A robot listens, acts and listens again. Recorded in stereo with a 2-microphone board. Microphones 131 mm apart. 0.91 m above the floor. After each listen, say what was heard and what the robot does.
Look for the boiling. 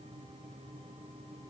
Keep listening.
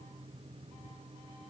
Keep listening.
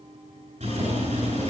The boiling: about 65° right or 115° right. Turn 65° right.
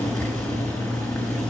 Found it: boiling, straight ahead.